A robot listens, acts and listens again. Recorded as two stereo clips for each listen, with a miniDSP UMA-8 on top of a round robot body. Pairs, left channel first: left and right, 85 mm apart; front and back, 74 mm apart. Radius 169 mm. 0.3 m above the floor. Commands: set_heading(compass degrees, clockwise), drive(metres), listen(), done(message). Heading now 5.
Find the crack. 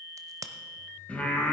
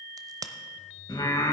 set_heading(145)
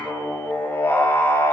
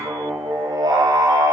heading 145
done("I heard a crack from this way, but can't make it out now.")